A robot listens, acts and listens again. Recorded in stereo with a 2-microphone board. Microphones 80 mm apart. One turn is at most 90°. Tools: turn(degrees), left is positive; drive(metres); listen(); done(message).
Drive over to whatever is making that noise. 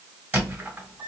turn(degrees=-20)
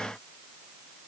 listen()
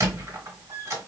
turn(degrees=-90)
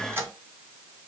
turn(degrees=-40)
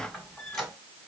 drive(metres=1.0)
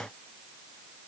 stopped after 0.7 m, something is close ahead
listen()
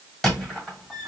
done("I am next to the squeak.")